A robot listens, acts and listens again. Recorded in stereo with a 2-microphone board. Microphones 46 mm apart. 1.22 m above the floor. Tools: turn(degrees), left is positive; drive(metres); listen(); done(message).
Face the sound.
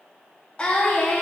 turn(degrees=25)
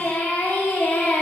turn(degrees=130)
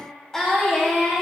turn(degrees=10)
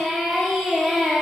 done("Found it: singing, straight ahead.")